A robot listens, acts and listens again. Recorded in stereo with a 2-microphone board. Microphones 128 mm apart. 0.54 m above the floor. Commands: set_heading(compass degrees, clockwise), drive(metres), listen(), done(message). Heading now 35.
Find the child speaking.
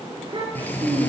set_heading(75)
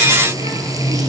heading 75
listen()
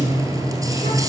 listen()
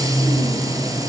done("I heard a child speaking, but can't make it out now. It was about straight ahead or 100° right.")